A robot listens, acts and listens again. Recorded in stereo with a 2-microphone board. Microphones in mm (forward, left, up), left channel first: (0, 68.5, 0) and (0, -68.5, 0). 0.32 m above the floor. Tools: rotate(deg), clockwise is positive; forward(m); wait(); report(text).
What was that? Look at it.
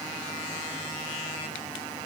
wait()
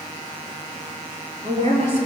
rotate(50)
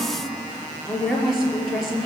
report("Found it: a woman speaking, straight ahead, over 4 m away.")